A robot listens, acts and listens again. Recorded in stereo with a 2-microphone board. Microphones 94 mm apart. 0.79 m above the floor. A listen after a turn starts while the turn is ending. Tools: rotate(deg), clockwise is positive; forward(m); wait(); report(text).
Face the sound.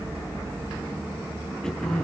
rotate(-30)
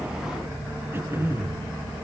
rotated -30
rotate(25)
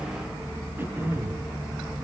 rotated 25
rotate(25)
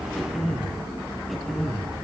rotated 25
report("Found it: throat clearing, straight ahead, over 4 m away.")